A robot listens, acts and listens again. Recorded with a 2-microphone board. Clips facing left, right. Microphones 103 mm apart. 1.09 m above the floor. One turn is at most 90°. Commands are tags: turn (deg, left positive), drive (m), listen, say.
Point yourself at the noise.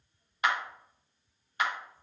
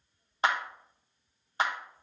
<turn deg="-30"/>
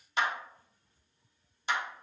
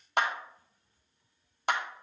<turn deg="-90"/>
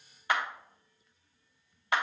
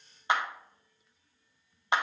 <turn deg="-25"/>
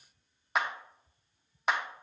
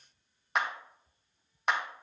<say>Facing the clap.</say>